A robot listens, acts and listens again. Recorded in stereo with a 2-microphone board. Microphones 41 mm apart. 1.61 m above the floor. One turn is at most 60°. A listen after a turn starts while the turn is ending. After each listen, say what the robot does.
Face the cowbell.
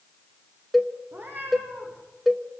Turn 30° left.
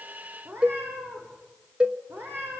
Turn 30° right.
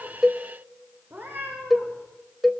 Found it: a cowbell, straight ahead.